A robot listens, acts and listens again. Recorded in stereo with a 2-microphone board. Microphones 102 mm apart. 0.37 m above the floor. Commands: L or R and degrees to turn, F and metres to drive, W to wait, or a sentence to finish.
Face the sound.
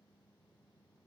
W
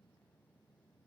W
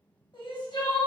L55
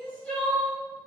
L10
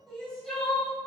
Facing the crying, 1 to 2 m away.